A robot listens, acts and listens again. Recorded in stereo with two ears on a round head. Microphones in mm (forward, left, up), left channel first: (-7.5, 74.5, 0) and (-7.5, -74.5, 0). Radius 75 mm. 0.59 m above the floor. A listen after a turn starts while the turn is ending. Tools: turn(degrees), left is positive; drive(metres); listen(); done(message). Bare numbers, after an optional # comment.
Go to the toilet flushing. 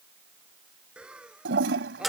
turn(-90)
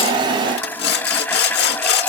# So it is at 10° left.
turn(10)
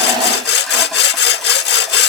listen()
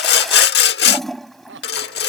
drive(1.0)
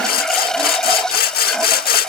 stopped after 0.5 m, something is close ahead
done("Something is in my way. I am facing the toilet flushing but have not reached it.")